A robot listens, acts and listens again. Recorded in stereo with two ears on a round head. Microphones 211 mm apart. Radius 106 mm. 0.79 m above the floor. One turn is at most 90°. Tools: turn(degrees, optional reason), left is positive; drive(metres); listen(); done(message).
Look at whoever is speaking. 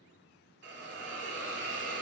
listen()
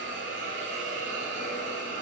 listen()
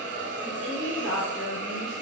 turn(degrees=30)
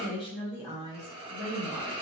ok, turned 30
turn(degrees=90, reason="So it is at 160° left.")
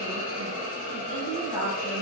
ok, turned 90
turn(degrees=55, reason="The woman speaking is now 55° left.")
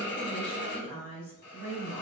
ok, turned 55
done("Facing the woman speaking.")